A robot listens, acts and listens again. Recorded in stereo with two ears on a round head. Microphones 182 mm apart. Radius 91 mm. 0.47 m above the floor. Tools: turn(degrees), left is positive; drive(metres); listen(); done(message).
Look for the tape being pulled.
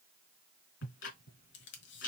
turn(degrees=60)
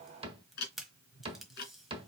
done("Found it: tape being pulled, straight ahead.")